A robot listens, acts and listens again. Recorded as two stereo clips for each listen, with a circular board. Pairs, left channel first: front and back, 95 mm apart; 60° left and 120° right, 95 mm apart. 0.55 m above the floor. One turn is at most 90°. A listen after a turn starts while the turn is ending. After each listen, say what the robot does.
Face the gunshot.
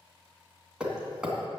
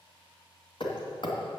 Keep listening.
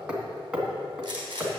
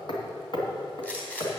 Turn 90° left.
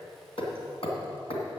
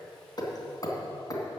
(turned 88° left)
Turn 50° left.
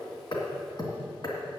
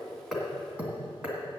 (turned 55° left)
I heard a gunshot from this way, but can't make it out now.